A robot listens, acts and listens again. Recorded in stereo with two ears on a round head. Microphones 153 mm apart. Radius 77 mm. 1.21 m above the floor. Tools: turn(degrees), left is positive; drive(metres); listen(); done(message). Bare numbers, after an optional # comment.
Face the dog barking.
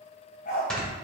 # The dog barking: about 55° left or 125° left.
turn(55)
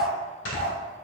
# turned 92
# So it is at 15° left.
turn(15)
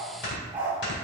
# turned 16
# The dog barking is now 10° right.
turn(-10)
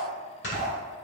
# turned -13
done("Found it: a dog barking, straight ahead, 2 to 4 m away.")